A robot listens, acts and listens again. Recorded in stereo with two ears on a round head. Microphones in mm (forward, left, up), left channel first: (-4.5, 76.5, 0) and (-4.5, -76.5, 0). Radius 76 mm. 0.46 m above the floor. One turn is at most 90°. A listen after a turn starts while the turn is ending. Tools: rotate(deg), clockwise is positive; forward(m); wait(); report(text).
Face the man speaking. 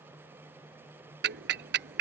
wait()
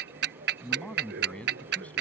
rotate(-30)
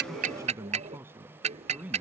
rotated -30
rotate(10)
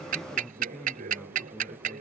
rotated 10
report("Facing the man speaking.")